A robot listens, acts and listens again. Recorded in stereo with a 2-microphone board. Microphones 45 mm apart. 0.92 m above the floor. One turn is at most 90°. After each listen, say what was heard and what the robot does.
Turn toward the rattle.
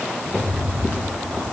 The rattle: about 70° left or 110° left. Turn 70° left.
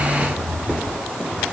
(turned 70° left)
So it is at 40° left. Turn 40° left.
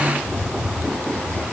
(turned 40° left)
Facing the rattle.